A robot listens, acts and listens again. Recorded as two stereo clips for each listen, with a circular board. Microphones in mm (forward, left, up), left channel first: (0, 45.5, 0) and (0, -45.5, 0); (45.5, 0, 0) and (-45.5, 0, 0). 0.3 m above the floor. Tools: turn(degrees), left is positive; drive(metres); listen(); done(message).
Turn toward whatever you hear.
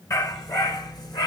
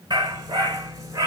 turn(degrees=125)
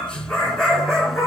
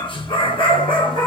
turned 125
done("Facing the dog barking, 1 to 2 m away.")